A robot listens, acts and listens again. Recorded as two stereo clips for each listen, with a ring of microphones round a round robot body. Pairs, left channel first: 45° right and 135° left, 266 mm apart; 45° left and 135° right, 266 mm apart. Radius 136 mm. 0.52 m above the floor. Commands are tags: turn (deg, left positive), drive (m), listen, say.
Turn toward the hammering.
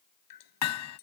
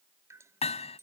<turn deg="-20"/>
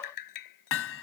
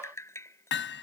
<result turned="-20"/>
<say>Found it: hammering, straight ahead.</say>